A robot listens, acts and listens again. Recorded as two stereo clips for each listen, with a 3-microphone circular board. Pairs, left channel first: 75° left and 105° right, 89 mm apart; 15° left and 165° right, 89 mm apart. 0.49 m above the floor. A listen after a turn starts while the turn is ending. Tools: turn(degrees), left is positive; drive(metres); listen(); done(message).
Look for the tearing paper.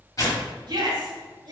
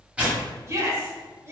turn(degrees=120)
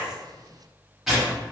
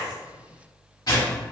turn(degrees=-20)
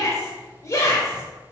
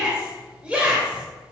listen()
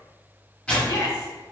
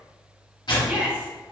done("Facing the tearing paper, 1 to 2 m away.")